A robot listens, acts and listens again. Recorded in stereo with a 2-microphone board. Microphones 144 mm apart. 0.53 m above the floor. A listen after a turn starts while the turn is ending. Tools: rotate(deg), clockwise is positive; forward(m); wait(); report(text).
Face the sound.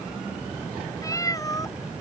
rotate(-25)
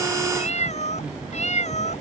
rotate(-130)
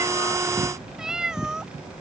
report("Facing the cat meowing.")